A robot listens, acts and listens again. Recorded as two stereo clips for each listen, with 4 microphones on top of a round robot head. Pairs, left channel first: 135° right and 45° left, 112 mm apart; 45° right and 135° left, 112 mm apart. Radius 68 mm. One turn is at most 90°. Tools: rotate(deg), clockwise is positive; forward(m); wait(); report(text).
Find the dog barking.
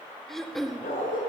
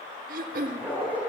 rotate(90)
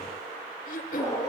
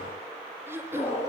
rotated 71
rotate(75)
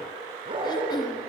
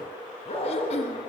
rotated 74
report("Found it: a dog barking, straight ahead, over 4 m away.")